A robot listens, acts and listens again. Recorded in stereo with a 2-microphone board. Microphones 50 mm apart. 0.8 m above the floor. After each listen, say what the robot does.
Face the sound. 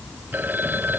Turn 45° right.
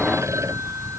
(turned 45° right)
Keep listening.
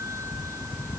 Keep listening.
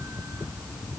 I heard a phone ringing, but can't make it out now. It was about straight ahead or 90° right.